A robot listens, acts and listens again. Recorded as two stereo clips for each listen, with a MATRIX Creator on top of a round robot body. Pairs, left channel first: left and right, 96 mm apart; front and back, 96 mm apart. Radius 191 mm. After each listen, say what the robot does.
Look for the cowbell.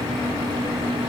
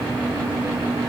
Keep listening.
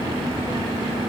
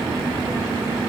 Keep listening.
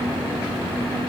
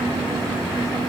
I can't make out a cowbell to turn to.